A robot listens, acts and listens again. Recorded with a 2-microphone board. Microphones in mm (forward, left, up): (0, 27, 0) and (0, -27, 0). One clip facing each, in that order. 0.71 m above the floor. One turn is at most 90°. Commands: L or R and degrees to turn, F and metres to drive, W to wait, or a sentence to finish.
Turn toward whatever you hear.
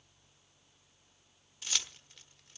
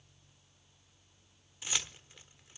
R15
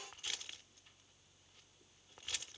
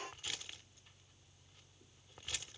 Found it: keys jangling, straight ahead.